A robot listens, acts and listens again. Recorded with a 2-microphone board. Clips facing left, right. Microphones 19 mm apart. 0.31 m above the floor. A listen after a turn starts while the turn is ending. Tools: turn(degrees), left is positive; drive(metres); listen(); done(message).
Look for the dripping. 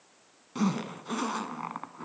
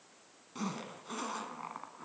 listen()
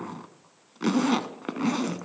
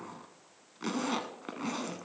listen()
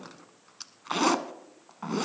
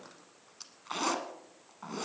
done("I can't make out dripping, only a zipper.")